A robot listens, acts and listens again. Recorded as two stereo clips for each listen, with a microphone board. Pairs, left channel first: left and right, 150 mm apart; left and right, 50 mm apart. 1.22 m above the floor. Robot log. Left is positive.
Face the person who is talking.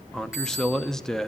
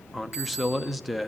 cmd yaw +30
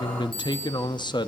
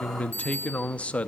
note: So it is at 145° left.
cmd yaw +145
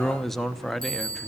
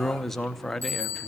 end: Facing the man speaking, under 1 m away.